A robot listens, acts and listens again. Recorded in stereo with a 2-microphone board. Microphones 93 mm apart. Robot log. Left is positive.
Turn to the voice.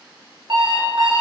cmd idle
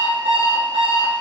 cmd idle
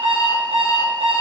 end: I can't make out anyone speaking to turn to.